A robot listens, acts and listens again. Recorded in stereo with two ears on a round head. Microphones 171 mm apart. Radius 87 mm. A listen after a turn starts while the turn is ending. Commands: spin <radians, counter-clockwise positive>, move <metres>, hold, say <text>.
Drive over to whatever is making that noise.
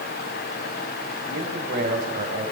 spin -0.79
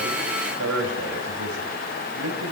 spin -1.57
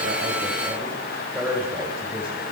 spin -0.17
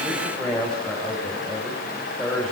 move 1.0
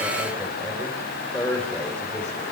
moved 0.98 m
move 1.0
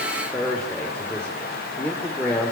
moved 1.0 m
move 1.0
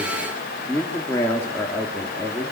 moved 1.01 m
spin 0.26
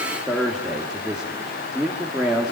move 1.0
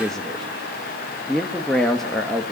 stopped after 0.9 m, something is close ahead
say I am next to the man speaking.